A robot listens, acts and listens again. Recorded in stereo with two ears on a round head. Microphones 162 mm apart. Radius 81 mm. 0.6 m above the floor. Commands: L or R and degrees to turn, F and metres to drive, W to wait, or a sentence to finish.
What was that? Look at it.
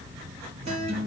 R35
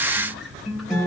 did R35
Found it: a guitar, straight ahead, 2 to 4 m away.